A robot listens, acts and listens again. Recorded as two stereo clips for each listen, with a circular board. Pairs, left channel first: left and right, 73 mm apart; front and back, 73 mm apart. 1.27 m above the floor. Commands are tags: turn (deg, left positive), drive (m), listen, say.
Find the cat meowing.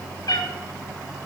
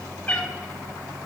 <turn deg="75"/>
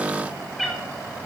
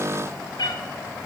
<say>Facing the cat meowing.</say>